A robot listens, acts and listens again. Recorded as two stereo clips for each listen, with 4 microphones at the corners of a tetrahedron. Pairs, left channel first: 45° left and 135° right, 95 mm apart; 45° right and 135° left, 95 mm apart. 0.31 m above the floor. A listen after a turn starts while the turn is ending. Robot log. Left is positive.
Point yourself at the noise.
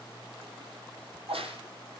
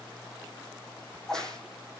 note: The crack: 130° right.
cmd yaw -130
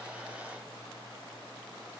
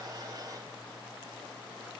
end: Facing where the crack came from. I can't hear it now.